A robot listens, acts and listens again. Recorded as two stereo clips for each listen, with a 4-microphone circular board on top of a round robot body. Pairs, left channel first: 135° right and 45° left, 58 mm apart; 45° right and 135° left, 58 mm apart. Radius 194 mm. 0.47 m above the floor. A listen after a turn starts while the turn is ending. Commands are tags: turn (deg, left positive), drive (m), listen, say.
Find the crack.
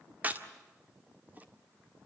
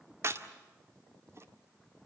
<turn deg="105"/>
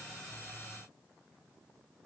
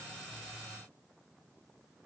<say>Facing where the crack came from. I can't hear it now.</say>